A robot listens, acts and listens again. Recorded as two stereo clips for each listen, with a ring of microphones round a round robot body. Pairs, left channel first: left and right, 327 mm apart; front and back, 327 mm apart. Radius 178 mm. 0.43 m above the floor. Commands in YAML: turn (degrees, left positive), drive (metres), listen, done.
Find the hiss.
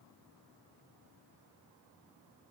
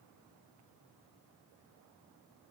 listen: true
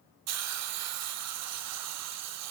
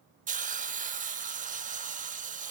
turn: -115
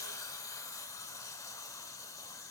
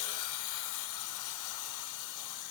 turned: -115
turn: 10
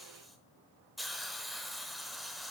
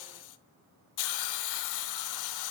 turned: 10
done: "Facing the hiss, under 1 m away."